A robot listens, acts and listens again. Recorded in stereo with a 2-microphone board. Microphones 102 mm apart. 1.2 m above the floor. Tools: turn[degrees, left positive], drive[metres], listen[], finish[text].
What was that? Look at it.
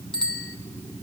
Action: turn[30]
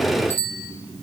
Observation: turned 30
Thought: So it is at 25° right.
Action: turn[-25]
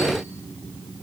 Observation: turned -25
Action: listen[]
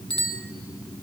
Thought: The bicycle bell is now 10° left.
Action: turn[10]
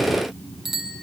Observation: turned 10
Action: finish[Found it: a bicycle bell, straight ahead, 2 to 4 m away.]